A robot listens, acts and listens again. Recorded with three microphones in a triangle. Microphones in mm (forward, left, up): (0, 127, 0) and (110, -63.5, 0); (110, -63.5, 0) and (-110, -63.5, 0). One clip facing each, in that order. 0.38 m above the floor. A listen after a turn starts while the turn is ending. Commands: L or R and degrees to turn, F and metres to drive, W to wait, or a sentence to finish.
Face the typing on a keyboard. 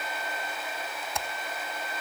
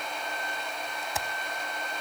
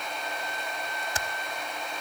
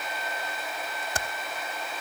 R145
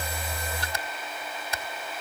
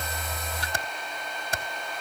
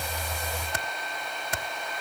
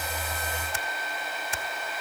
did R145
R20
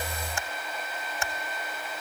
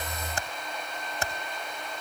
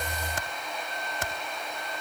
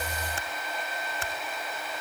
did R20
Found it: typing on a keyboard, straight ahead, under 1 m away.